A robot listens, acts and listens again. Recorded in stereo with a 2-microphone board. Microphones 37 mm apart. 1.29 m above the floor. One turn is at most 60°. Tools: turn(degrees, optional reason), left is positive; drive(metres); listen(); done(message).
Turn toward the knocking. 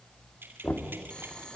turn(degrees=60, reason="The knocking: about 70° left or 110° left.")
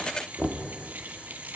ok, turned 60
turn(degrees=10, reason="So it is at 10° left.")
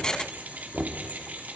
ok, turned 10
done("Facing the knocking, 2 to 4 m away.")